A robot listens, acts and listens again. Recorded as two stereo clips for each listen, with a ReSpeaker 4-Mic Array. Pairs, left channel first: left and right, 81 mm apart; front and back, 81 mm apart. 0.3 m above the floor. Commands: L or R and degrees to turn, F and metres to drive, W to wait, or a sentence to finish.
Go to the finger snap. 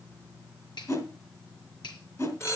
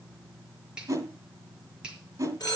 L100
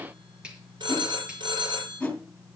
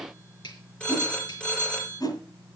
R10
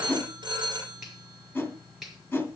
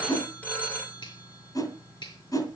F1.0
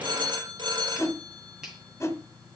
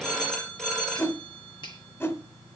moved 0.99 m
F1.0
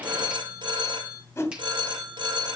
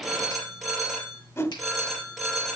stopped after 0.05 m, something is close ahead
W
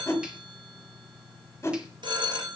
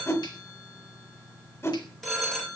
W
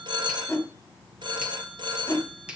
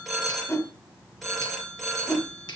R15
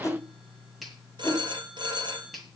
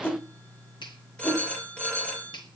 Blocked. The finger snap is further on, straight ahead.